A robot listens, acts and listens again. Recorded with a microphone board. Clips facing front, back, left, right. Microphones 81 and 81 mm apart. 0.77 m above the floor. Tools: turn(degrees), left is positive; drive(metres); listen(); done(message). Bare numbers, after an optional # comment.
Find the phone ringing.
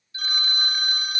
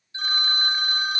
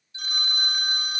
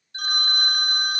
# The phone ringing: 120° right.
turn(-120)
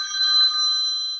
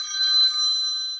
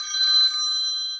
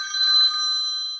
# The phone ringing is now 40° right.
turn(-40)
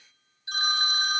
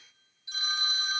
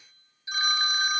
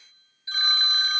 # The phone ringing is now 15° left.
turn(15)
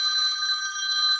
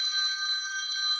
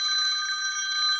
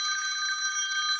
done("Found it: a phone ringing, straight ahead.")